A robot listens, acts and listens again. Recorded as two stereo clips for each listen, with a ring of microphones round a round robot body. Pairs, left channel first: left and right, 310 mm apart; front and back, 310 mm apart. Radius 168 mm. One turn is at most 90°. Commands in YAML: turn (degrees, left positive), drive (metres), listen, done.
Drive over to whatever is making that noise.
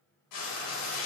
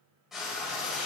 turn: 90
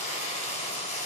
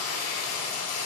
turn: 25
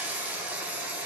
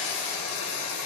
drive: 1.0
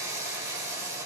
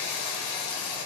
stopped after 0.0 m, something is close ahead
turn: -10
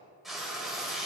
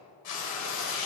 done: "Blocked. The frying is further on, straight ahead."